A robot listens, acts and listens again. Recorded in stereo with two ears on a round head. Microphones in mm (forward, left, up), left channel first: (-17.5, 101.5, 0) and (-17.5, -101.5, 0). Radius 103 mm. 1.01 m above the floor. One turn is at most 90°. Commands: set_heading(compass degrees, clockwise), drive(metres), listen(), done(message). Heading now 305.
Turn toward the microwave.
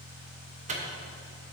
set_heading(335)
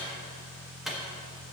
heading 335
done("Found it: a microwave, straight ahead.")